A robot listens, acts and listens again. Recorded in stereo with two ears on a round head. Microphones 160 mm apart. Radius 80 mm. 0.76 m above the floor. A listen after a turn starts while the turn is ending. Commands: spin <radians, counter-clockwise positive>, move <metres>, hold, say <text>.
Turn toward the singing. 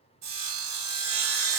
hold
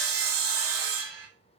hold
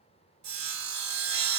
say I can't make out singing to turn to.